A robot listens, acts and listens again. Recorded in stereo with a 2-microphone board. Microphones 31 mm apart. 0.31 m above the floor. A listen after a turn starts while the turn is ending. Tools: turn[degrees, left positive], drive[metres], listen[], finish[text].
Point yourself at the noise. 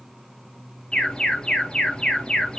Thought: The alarm: about 20° left or 160° left.
Action: turn[20]
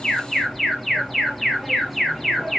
Action: finish[Found it: an alarm, straight ahead.]